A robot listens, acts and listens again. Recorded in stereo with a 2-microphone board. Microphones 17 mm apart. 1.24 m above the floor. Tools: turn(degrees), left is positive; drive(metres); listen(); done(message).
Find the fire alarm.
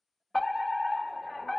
turn(degrees=25)
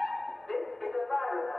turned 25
turn(degrees=125)
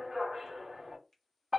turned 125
turn(degrees=-25)
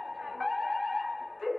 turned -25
turn(degrees=10)
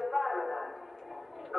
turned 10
done("Found it: a fire alarm, straight ahead, 1 to 2 m away.")